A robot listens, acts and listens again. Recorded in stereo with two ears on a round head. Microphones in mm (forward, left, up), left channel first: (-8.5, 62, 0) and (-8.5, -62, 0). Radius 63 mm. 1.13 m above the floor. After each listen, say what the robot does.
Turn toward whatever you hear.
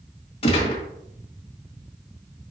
Turn 45° left.
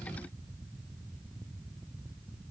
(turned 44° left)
Keep listening.
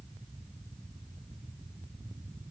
I heard a gunshot, but can't make it out now. It was about 5° left or 90° left.